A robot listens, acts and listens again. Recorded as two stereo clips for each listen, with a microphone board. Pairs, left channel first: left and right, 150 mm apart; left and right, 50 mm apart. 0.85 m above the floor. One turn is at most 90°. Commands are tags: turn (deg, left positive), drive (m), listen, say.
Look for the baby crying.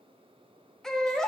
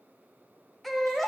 <turn deg="30"/>
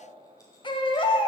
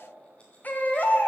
<turn deg="90"/>
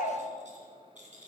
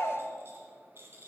<turn deg="65"/>
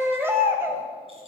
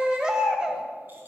<turn deg="-15"/>
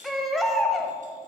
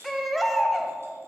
<say>Found it: a baby crying, straight ahead, 1 to 2 m away.</say>